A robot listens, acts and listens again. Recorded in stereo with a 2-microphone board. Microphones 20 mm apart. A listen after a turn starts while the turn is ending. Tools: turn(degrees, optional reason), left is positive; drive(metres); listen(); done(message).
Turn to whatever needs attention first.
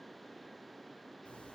listen()
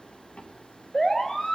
turn(degrees=20, reason="The siren: about 20° left or 160° left.")
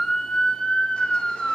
turn(degrees=135, reason="So it is at 135° left.")
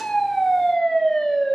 turn(degrees=30, reason="The siren is now 30° left.")
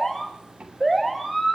turn(degrees=10, reason="The siren is now 10° left.")
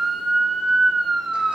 done("Found it: a siren, straight ahead.")